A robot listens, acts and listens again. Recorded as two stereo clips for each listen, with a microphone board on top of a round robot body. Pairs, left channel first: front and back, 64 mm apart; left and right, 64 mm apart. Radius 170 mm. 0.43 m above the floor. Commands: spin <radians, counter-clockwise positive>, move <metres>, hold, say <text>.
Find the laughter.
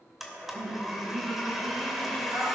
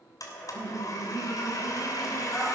spin 2.88
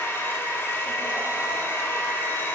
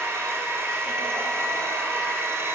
hold
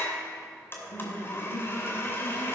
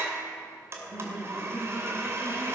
say Found it: laughter, straight ahead.